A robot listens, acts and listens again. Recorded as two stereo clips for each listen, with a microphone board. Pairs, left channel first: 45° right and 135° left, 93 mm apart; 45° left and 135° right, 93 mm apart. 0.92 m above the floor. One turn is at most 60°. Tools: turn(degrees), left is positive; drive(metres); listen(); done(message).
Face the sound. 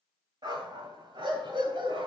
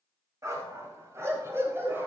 turn(degrees=60)
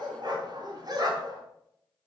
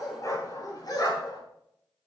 turn(degrees=60)
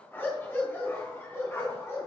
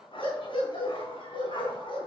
turn(degrees=15)
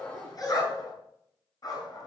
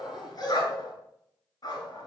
done("Found it: a dog barking, straight ahead.")